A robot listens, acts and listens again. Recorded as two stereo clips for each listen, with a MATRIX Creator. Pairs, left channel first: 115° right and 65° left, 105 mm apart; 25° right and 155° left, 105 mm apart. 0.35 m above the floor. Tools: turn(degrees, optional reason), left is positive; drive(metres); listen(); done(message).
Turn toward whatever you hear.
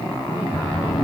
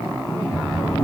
turn(degrees=-45, reason="The sliding door: 45° right.")
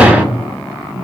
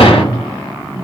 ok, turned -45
turn(degrees=-10, reason="The sliding door is now 10° right.")
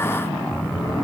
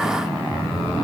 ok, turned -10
done("Facing the sliding door, 1 to 2 m away.")